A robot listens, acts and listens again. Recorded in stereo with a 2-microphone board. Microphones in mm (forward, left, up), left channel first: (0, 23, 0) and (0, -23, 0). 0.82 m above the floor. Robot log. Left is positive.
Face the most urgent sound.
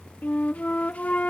cmd idle
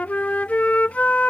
cmd idle
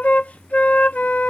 end: I can't make out anything urgent, only a flute.